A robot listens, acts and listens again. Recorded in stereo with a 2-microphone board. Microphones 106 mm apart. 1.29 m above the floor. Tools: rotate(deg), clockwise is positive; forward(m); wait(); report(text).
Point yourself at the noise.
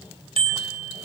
rotate(70)
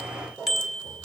report("Found it: a bicycle bell, straight ahead, over 4 m away.")